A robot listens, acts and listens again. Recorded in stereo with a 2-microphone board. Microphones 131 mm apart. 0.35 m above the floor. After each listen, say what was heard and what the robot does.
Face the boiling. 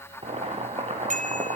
The boiling: about 45° right or 135° right. Turn 45° right.
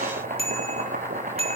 So it is at 90° right. Turn 90° right.
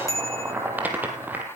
The boiling is now 10° right. Turn 10° right.
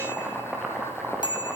Found it: boiling, straight ahead.